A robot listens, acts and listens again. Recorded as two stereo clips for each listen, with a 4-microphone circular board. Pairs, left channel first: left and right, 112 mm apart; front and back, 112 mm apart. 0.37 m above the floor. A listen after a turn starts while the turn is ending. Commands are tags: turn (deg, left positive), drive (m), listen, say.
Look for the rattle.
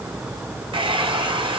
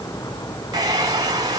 <listen/>
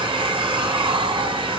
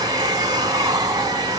<listen/>
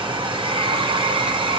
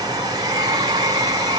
<say>I can't make out a rattle to turn to.</say>